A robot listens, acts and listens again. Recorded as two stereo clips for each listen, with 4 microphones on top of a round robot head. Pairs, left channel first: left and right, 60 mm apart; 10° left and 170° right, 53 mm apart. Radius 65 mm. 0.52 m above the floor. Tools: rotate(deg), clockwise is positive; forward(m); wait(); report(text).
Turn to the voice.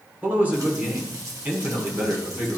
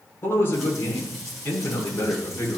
rotate(30)
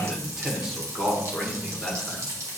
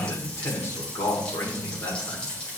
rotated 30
rotate(10)
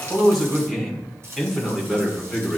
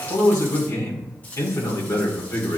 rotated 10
report("Facing the man speaking, 1 to 2 m away.")